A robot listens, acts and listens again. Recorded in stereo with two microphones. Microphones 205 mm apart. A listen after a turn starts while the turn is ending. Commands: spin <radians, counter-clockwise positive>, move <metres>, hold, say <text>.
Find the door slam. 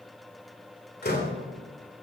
spin 0.87
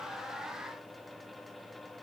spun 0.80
hold
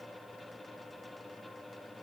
say I heard a door slam, but can't make it out now. It was about 5° left or 85° left.